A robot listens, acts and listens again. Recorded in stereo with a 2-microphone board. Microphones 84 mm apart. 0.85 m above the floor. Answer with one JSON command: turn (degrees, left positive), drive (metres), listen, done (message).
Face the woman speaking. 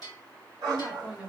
{"turn": -30}
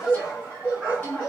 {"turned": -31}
{"turn": 20}
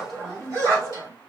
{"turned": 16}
{"done": "Facing the woman speaking."}